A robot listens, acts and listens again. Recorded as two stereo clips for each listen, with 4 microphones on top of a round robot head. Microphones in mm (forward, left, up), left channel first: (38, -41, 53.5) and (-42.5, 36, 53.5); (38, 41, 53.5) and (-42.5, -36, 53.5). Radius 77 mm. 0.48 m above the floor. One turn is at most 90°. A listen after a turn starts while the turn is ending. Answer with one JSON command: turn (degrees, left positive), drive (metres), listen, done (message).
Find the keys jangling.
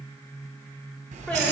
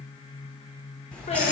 {"turn": 90}
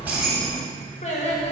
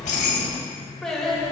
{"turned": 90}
{"turn": 30}
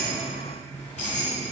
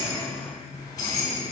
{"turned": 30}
{"turn": -15}
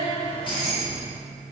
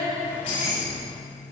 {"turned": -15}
{"done": "Found it: keys jangling, straight ahead, 2 to 4 m away."}